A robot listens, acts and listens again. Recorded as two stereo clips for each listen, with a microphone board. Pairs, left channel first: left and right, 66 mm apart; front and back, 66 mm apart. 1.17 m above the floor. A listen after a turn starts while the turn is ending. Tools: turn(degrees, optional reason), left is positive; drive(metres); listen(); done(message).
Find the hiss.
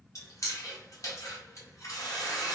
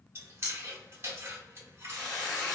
turn(degrees=80, reason="The hiss: 80° left.")
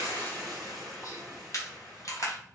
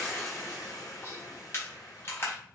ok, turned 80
done("Found it: a hiss, straight ahead.")